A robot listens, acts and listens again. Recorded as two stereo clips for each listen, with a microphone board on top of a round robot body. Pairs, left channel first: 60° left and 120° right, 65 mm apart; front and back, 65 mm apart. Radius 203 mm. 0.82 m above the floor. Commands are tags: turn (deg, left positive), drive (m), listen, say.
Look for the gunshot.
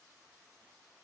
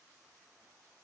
<listen/>
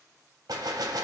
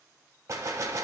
<turn deg="-135"/>
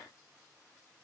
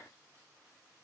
<say>Facing where the gunshot came from. I can't hear it now.</say>